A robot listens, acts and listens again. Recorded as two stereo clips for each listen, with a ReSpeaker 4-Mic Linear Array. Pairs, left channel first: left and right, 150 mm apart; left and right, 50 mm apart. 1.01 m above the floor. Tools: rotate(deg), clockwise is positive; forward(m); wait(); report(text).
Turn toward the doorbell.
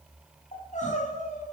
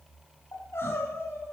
wait()
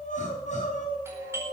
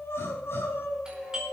rotate(20)
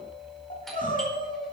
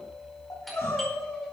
report("Facing the doorbell.")